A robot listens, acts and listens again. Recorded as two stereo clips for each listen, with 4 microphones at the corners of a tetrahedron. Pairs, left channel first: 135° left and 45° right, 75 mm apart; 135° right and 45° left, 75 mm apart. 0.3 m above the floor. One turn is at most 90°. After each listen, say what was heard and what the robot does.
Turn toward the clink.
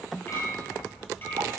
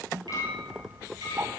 The clink: 75° left. Turn 75° left.
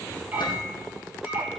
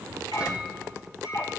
The clink is now 20° left. Turn 20° left.
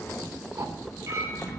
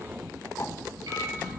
Found it: a clink, straight ahead, over 4 m away.